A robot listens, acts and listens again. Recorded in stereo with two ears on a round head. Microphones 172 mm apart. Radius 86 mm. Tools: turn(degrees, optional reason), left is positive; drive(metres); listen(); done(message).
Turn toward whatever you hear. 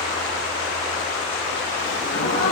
turn(degrees=70, reason="The gasp: about 70° left or 110° left.")
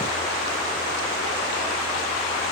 listen()
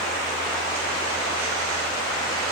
done("I heard a gasp, but can't make it out now. It was about straight ahead or 40° left.")